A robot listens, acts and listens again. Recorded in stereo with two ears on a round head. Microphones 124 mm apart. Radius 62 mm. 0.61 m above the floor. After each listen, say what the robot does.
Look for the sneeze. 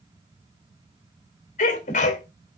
Turn 55° left.
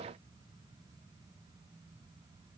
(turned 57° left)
Keep listening.
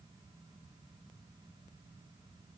I heard a sneeze, but can't make it out now. It was about straight ahead or 65° left.